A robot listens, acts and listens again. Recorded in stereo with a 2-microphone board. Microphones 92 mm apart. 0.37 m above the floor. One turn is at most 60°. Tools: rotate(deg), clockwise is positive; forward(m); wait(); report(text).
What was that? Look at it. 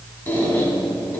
rotate(-20)
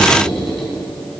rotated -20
report("Found it: a squeak, straight ahead.")